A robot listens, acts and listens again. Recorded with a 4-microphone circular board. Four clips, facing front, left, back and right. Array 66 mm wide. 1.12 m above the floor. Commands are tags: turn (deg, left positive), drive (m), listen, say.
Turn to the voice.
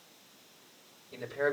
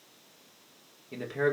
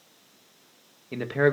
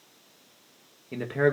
<turn deg="-155"/>
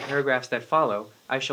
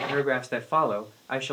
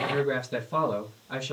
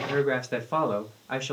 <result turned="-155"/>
<turn deg="20"/>
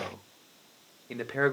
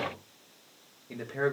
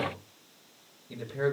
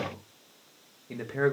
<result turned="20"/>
<say>Facing the man speaking, 1 to 2 m away.</say>